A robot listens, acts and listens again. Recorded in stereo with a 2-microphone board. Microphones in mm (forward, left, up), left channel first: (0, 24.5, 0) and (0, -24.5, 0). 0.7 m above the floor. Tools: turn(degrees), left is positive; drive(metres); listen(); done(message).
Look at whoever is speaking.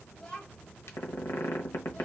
turn(degrees=20)
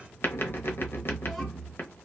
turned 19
listen()
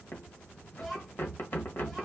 done("Facing the child speaking, 1 to 2 m away.")